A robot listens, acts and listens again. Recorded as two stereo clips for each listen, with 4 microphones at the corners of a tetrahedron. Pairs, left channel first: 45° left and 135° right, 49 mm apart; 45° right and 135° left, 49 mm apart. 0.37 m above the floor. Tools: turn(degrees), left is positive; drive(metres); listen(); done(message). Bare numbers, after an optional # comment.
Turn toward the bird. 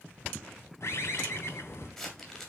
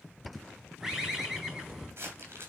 # The bird: 50° left.
turn(50)
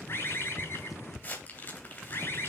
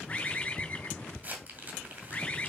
# The bird is now 15° left.
turn(15)
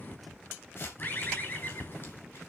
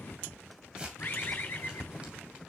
done("Found it: a bird, straight ahead, 2 to 4 m away.")